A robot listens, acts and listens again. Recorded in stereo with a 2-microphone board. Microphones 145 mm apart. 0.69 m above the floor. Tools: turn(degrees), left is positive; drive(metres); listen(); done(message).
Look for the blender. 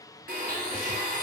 turn(degrees=-90)
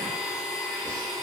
done("Facing the blender, under 1 m away.")